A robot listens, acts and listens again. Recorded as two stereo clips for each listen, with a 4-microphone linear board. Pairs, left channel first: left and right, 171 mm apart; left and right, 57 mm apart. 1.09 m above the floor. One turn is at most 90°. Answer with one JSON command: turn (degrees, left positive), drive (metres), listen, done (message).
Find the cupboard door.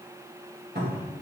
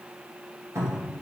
{"turn": -70}
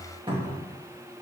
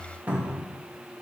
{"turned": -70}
{"turn": -30}
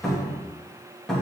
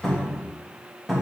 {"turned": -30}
{"done": "Found it: a cupboard door, straight ahead, 2 to 4 m away."}